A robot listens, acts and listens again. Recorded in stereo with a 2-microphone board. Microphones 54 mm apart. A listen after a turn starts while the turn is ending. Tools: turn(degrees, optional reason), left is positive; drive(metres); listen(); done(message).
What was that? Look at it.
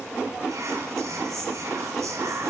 turn(degrees=-65, reason="The whispering: about 65° right or 115° right.")
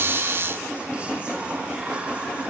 listen()
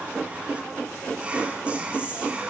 turn(degrees=-25, reason="So it is at 25° right.")
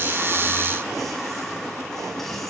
listen()
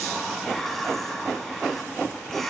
done("Facing the whispering, 1 to 2 m away.")